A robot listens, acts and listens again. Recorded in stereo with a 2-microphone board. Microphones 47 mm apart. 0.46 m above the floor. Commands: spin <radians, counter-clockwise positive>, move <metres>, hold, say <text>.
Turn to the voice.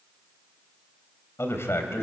spin 1.13
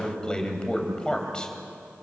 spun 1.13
spin 0.35
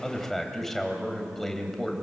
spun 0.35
spin 0.17
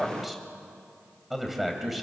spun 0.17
say Facing the man speaking, 2 to 4 m away.